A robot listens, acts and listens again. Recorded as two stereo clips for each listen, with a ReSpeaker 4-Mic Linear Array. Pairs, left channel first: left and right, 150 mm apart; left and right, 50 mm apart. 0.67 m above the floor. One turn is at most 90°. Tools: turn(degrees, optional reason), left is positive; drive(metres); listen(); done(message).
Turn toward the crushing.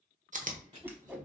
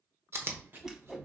turn(degrees=-50, reason="The crushing: about 50° right or 130° right.")
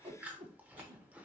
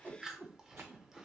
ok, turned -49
listen()
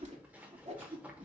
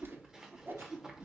listen()
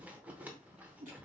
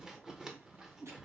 done("I heard crushing, but can't make it out now. It was about straight ahead or 80° right.")